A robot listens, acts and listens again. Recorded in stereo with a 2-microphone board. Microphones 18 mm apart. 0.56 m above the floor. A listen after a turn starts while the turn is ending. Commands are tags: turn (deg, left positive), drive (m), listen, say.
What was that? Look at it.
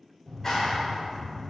<turn deg="25"/>
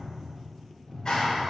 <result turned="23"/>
<turn deg="130"/>
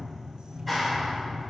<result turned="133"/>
<say>Found it: a clap, straight ahead, 1 to 2 m away.</say>